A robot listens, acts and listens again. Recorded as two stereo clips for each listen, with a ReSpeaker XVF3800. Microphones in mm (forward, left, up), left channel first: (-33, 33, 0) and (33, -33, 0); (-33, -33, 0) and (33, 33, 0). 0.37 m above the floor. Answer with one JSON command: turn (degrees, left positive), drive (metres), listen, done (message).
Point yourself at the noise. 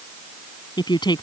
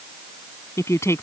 {"turn": 165}
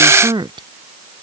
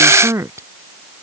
{"turn": -15}
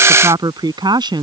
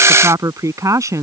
{"turn": -10}
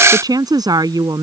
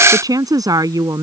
{"done": "Found it: a woman speaking, straight ahead."}